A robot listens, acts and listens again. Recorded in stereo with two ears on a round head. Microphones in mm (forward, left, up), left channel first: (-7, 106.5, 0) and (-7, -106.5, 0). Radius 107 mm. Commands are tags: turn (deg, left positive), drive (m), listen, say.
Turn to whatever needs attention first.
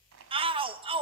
<turn deg="-25"/>
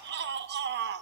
<turn deg="-135"/>
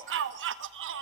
<turn deg="-50"/>
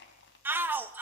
<turn deg="-10"/>
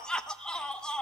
<say>Facing the shout.</say>